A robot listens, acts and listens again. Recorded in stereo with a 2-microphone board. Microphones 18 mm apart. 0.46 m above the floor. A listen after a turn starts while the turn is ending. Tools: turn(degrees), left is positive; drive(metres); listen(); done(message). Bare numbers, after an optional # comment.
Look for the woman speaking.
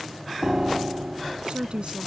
# The woman speaking: about 65° right or 115° right.
turn(-65)
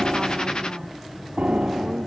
listen()
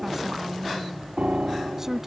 # So it is at 20° right.
turn(-20)
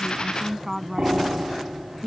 # The woman speaking is now 10° right.
turn(-10)
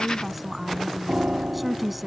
done("Facing the woman speaking.")